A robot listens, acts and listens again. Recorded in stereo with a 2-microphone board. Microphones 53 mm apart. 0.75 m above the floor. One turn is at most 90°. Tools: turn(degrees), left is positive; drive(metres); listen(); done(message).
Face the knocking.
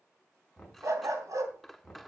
turn(degrees=30)
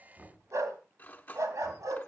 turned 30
turn(degrees=-30)
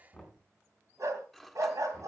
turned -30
done("Facing the knocking.")